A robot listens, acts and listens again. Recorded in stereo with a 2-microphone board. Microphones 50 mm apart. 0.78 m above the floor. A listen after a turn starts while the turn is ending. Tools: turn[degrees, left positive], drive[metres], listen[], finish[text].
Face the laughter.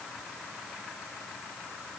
Action: listen[]
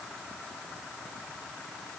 Action: listen[]
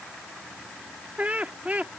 Thought: The laughter: about 30° right or 150° right.
Action: turn[-30]
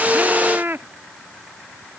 Thought: So it is at 115° right.
Action: turn[-115]
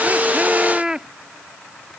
Thought: The laughter is now 20° right.
Action: turn[-20]
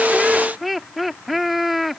Action: finish[Facing the laughter.]